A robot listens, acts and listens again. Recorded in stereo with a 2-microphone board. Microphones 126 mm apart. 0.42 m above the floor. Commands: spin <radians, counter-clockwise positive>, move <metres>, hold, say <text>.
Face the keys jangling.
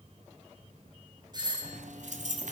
spin -1.57
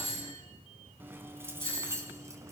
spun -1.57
spin -0.44
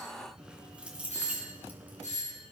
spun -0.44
spin -0.17
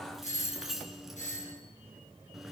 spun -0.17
say Facing the keys jangling, 2 to 4 m away.